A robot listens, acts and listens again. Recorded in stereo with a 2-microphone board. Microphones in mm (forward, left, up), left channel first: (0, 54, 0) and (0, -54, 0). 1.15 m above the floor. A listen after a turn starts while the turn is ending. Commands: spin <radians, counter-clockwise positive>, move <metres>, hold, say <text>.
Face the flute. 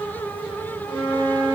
spin 0.52
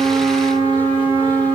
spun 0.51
spin 2.36
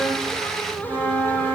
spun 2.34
say Facing the flute.